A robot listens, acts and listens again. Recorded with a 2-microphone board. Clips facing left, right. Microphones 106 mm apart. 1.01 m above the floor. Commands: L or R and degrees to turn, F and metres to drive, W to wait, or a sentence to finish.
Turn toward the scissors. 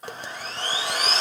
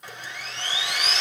W
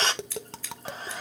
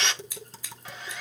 R15
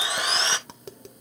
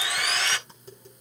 W
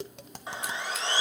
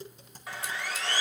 W
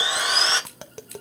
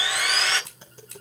R150
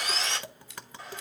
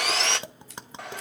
R40
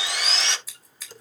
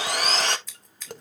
Facing the scissors, 2 to 4 m away.